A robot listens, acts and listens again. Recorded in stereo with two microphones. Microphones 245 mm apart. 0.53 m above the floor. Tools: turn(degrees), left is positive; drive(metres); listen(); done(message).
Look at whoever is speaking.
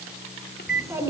turn(degrees=-30)
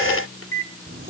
turn(degrees=-140)
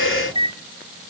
listen()
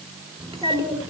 turn(degrees=-15)
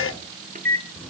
done("Found it: a child speaking, straight ahead, over 4 m away.")